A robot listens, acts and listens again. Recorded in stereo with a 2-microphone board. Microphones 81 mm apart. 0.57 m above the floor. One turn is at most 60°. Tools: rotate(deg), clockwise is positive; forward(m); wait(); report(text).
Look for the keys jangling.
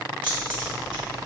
rotate(60)
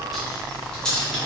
rotate(-15)
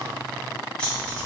rotate(-15)
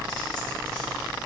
rotate(-10)
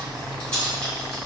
rotate(-10)
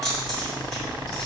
report("Found it: keys jangling, straight ahead.")